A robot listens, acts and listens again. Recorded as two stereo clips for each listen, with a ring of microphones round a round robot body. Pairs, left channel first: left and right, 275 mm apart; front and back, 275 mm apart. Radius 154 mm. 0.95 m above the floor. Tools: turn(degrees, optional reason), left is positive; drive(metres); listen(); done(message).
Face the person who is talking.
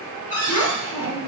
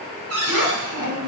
turn(degrees=105, reason="The child speaking: 105° left.")
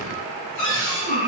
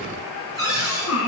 turn(degrees=30, reason="The child speaking is now 30° left.")
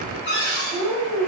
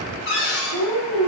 done("Found it: a child speaking, straight ahead, 2 to 4 m away.")